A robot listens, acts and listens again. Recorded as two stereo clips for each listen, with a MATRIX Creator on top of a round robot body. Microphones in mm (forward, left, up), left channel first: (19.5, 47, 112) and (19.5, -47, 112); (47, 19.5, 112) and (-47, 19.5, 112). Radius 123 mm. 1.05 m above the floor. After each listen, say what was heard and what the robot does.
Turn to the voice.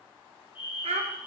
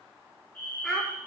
The child speaking: 85° right. Turn 85° right.
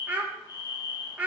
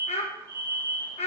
The child speaking is now 15° right. Turn 15° right.
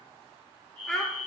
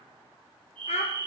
Found it: a child speaking, straight ahead, 2 to 4 m away.